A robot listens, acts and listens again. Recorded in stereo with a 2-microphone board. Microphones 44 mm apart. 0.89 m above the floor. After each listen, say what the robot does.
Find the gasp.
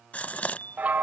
Turn 40° left.
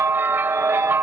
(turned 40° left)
Keep listening.
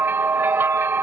I heard a gasp, but can't make it out now. It was about straight ahead or 100° left.